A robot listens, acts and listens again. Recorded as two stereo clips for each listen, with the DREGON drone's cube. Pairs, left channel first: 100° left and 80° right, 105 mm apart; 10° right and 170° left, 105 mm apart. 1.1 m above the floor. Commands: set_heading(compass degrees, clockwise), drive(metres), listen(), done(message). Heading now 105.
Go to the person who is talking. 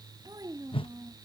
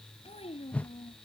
set_heading(135)
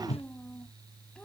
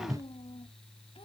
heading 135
set_heading(115)
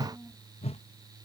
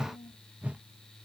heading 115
drive(1.0)
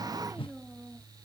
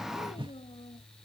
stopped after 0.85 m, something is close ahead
done("Blocked. The child speaking is further on, straight ahead.")